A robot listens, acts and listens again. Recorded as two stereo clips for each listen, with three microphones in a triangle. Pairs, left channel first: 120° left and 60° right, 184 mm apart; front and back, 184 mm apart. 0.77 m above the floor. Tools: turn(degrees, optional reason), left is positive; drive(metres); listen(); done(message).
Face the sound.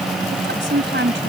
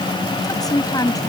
turn(degrees=-70, reason="The woman speaking: 70° right.")
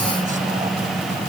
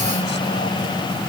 listen()
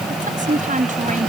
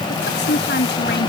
turn(degrees=-15, reason="The woman speaking is now 15° right.")
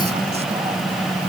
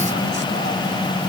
listen()
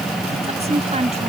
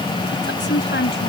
done("Found it: a woman speaking, straight ahead.")